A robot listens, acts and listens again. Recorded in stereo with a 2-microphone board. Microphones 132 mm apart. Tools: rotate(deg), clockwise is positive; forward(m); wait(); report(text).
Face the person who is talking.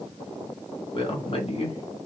rotate(-50)
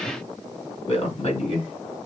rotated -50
rotate(-55)
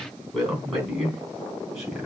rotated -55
report("Found it: a man speaking, straight ahead, 2 to 4 m away.")